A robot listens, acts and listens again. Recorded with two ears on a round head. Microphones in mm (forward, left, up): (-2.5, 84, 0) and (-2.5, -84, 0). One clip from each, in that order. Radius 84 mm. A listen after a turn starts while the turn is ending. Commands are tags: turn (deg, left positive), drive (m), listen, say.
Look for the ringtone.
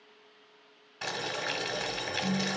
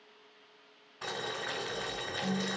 <turn deg="-30"/>
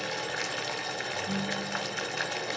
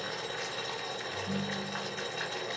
<turn deg="-140"/>
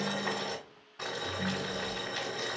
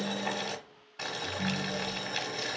<say>Found it: a ringtone, straight ahead.</say>